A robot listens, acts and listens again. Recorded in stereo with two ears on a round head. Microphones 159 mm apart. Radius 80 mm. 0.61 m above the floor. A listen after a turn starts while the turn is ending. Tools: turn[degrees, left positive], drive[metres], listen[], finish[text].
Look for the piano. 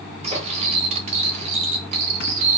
Action: listen[]
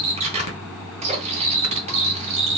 Action: listen[]
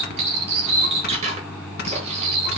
Action: finish[I can't make out a piano, only cutlery clinking.]